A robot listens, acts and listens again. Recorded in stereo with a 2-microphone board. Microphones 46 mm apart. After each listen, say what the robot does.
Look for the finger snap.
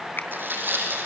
Keep listening.
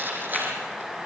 Keep listening.
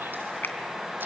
Turn 45° left.
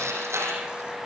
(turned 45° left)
Keep listening.
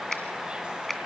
Found it: a finger snap, straight ahead.